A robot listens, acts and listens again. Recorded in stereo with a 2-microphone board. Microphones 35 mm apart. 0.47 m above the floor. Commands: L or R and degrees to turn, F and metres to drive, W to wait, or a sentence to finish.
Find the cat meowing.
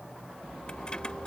W
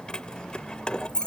W
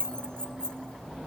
I can't make out a cat meowing to turn to.